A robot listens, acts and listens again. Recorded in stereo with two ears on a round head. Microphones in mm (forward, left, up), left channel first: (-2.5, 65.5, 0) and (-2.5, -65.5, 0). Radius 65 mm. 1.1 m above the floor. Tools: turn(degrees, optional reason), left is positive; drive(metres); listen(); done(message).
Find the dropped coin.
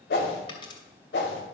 turn(degrees=35, reason="The dropped coin: about 35° left or 145° left.")
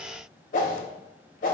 listen()
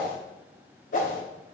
done("I heard a dropped coin, but can't make it out now. It was about straight ahead or 110° left.")